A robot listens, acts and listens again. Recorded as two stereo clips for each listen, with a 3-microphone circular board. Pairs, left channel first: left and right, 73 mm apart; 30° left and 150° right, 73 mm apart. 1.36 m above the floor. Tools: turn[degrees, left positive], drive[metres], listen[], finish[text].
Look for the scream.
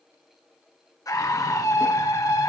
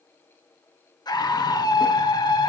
Thought: The scream: 50° left.
Action: turn[50]
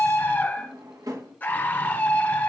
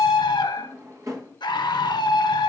Thought: The scream is now 25° left.
Action: turn[25]
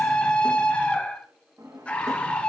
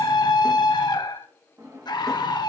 Thought: The scream is now 15° left.
Action: turn[15]
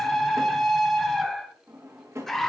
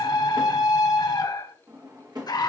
Action: finish[Found it: a scream, straight ahead.]